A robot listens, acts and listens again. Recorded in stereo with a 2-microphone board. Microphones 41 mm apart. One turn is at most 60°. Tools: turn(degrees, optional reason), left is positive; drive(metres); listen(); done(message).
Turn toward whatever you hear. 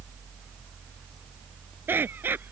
turn(degrees=-60, reason="The laughter: about 60° right or 120° right.")
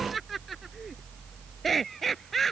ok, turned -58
done("Found it: laughter, straight ahead.")